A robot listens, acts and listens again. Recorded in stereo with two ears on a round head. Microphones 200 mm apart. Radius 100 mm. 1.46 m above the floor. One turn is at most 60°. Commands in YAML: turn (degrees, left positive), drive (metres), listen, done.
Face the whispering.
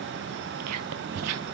turn: -60
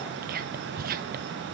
turn: -40
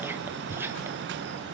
turn: -10
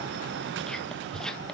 done: "Found it: whispering, straight ahead, under 1 m away."